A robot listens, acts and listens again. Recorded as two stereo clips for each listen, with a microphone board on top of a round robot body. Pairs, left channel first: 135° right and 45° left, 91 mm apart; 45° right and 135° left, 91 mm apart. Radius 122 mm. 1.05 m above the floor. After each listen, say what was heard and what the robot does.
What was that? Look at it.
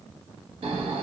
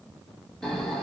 The snoring: 40° left. Turn 40° left.
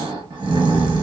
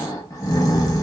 The snoring is now 10° left. Turn 10° left.
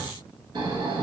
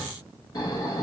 Facing the snoring.